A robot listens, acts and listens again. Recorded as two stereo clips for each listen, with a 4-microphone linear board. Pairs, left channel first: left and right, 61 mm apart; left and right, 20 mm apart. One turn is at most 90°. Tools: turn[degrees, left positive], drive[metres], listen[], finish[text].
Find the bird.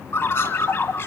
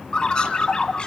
Thought: The bird: about 45° left or 135° left.
Action: turn[45]
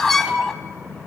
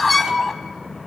Action: finish[Facing the bird, under 1 m away.]